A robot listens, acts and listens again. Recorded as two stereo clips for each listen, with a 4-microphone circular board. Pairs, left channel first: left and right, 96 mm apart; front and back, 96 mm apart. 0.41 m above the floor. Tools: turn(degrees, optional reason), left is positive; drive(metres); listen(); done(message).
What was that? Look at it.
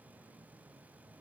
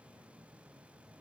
listen()
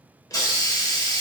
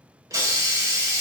turn(degrees=135, reason="The hiss: 135° left.")
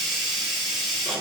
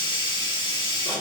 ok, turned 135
done("Facing the hiss, under 1 m away.")